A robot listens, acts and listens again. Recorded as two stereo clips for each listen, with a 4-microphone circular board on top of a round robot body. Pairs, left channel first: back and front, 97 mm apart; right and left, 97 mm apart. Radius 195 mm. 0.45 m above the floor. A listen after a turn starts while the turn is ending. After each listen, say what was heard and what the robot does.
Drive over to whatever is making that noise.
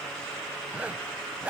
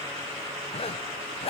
The zipper: 75° right. Turn 75° right.
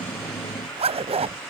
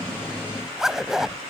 Drive 1.0 m forward.
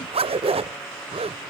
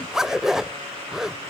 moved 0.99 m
Drive 1.0 m forward.
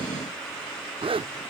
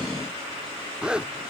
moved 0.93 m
The zipper is now 10° left. Turn 10° left.
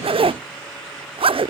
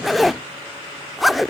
Drive 1.0 m forward.
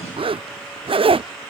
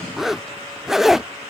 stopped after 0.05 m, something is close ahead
Arrived at the zipper, straight ahead.